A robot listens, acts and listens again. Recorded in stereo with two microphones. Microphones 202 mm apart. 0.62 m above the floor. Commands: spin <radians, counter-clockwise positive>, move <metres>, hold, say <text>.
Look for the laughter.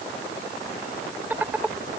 spin -0.52
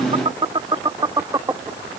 spin -0.26
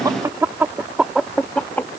spin 0.52
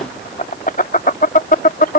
spin 2.36
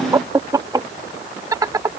spin -0.26
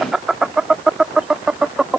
say Facing the laughter.